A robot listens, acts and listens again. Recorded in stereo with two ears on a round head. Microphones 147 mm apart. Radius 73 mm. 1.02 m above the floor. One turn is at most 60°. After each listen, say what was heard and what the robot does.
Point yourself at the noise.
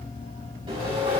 The sawing: about 30° right or 150° right. Turn 30° right.
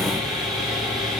Found it: sawing, straight ahead, over 4 m away.